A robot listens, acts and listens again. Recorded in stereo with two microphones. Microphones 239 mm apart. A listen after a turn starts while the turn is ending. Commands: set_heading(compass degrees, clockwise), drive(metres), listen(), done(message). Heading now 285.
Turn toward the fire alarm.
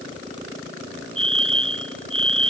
set_heading(345)
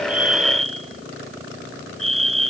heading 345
set_heading(50)
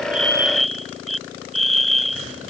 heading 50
done("Found it: a fire alarm, straight ahead.")